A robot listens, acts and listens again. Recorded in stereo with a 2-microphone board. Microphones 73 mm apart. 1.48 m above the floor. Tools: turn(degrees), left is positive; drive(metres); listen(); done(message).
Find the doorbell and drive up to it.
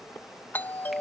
turn(degrees=30)
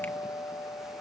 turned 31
turn(degrees=120)
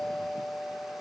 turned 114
drive(metres=1.0)
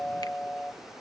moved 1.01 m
turn(degrees=10)
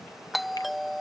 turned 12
drive(metres=1.0)
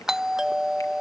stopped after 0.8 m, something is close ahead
turn(degrees=-10)
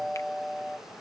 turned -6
done("I am next to the doorbell.")